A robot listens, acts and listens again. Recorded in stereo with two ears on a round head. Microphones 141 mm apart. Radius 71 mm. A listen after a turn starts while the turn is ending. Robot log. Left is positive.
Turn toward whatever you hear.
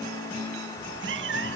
cmd yaw -90
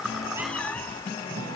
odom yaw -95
note: So it is at 10° left.
cmd yaw +10
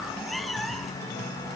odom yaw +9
end: Facing the cat meowing.